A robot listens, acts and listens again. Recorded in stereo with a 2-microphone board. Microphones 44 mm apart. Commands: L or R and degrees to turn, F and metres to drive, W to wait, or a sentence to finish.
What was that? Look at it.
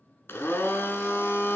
L65
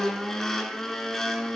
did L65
L10
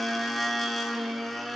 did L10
Found it: a blender, straight ahead, 1 to 2 m away.